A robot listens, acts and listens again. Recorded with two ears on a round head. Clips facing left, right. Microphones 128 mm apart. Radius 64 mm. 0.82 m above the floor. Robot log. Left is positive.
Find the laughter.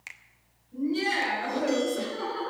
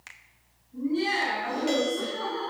cmd yaw +90
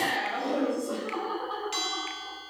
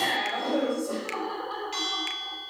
note: So it is at 10° right.
cmd yaw -10
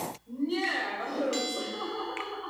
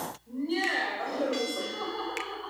end: Found it: laughter, straight ahead.